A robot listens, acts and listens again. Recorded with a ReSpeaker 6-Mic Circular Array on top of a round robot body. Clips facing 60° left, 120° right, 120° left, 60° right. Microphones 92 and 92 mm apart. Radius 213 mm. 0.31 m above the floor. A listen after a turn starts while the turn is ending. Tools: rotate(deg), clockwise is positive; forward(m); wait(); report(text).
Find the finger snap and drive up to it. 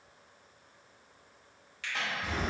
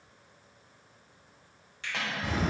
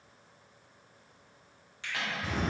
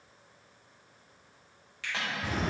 rotate(175)
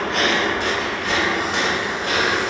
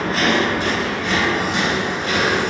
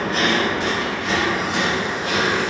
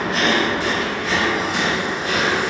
wait()
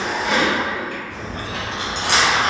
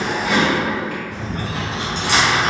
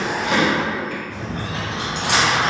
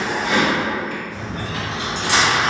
wait()
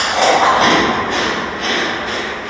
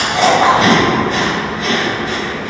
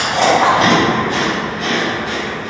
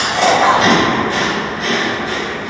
report("I heard a finger snap from this way, but can't make it out now. I did not reach it.")